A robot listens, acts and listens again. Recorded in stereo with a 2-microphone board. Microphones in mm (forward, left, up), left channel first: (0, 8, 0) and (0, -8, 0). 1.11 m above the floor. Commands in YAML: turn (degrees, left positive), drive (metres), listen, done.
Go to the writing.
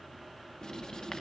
turn: 50
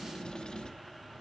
turn: 75
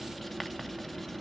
drive: 1.0
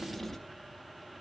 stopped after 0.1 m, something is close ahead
turn: 15
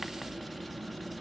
done: "Blocked. The writing is further on, straight ahead."